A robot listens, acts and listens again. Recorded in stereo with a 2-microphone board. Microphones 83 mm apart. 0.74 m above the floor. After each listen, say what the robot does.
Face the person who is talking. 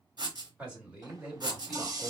Turn 30° right.
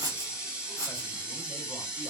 Keep listening.
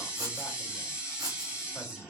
Keep listening.
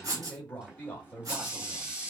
Turn 20° left.
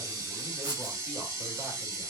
Keep listening.
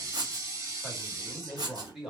Facing the man speaking.